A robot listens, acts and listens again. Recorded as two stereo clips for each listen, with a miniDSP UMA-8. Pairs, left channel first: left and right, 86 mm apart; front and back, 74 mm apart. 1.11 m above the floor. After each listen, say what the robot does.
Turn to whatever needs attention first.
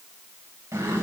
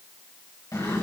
Keep listening.
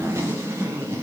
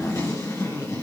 Keep listening.
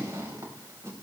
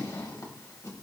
I can't make out anything urgent, only a zipper.